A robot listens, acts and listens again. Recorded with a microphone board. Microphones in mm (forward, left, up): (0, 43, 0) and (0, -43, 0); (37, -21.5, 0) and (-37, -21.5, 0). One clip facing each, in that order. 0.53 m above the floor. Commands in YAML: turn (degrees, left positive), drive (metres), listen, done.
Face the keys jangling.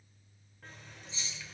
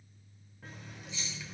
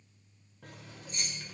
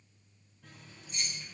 turn: 35
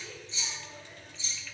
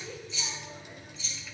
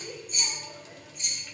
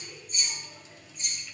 turn: 25
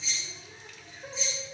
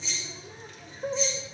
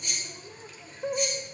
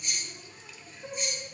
done: "Found it: keys jangling, straight ahead."